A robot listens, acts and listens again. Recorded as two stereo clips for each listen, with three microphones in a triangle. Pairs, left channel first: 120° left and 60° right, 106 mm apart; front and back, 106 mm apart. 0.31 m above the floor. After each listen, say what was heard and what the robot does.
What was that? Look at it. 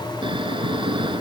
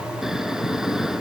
The snoring: 95° right. Turn 95° right.
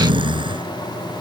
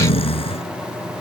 The snoring is now 25° right. Turn 25° right.
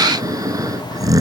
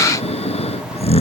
Facing the snoring.